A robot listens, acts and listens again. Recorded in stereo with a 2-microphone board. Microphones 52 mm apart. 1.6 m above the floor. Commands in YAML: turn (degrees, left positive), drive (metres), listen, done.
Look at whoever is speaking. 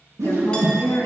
turn: 60
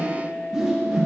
listen: true
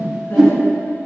listen: true
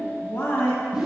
turn: 55
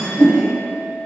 listen: true
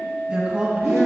turn: -20
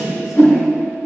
listen: true
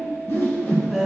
done: "Found it: a woman speaking, straight ahead."